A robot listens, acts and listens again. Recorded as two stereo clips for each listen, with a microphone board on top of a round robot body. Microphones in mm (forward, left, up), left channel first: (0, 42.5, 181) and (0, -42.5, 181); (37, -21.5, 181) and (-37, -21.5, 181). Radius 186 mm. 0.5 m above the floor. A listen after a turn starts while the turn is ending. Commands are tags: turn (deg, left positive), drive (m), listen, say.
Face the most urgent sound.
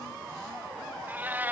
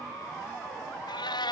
<listen/>
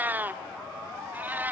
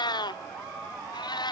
<listen/>
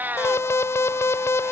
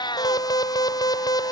<turn deg="30"/>
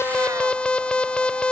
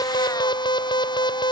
<turn deg="10"/>
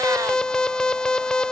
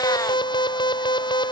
<turn deg="10"/>
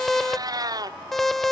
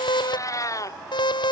<say>Facing the alarm.</say>